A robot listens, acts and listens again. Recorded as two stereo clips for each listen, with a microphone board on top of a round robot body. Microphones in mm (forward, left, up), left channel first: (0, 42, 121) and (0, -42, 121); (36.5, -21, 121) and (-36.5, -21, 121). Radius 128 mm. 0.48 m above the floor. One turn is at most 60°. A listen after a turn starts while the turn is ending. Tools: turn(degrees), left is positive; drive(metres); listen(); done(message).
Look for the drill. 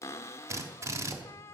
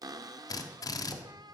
turn(degrees=-35)
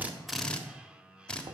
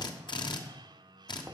turn(degrees=10)
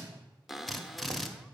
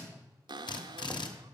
done("Facing the drill, 1 to 2 m away.")